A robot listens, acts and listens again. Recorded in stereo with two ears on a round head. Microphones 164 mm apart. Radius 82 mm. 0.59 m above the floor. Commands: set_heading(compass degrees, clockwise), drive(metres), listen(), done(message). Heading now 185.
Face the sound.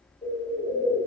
set_heading(160)
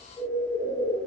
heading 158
done("Found it: a bird, straight ahead, 1 to 2 m away.")